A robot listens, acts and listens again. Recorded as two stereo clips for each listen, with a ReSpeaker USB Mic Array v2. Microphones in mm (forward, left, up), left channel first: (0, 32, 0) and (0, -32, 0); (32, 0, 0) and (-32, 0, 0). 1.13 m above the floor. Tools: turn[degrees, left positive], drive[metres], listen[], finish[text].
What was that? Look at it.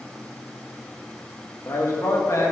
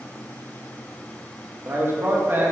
Thought: The man speaking: 125° left.
Action: turn[125]
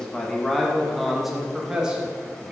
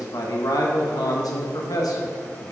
Thought: The man speaking is now 15° right.
Action: turn[-15]
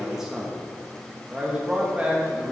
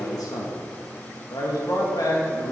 Thought: The man speaking is now 15° right.
Action: turn[-15]
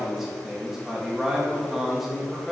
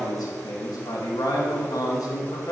Action: finish[Found it: a man speaking, straight ahead.]